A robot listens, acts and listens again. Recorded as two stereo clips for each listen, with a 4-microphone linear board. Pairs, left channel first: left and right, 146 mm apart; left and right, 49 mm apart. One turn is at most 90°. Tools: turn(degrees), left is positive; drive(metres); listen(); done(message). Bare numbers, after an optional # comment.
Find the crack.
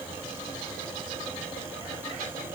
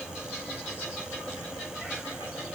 listen()
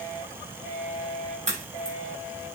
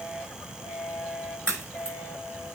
# The crack: about 50° right or 130° right.
turn(-50)
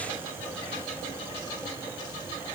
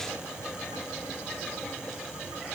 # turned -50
listen()
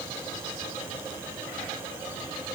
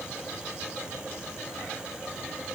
done("I heard a crack, but can't make it out now. It was about straight ahead or 80° right.")